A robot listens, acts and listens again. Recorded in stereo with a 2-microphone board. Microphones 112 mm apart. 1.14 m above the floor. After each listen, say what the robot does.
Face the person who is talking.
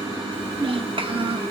Turn 50° right.
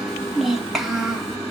Found it: a child speaking, straight ahead.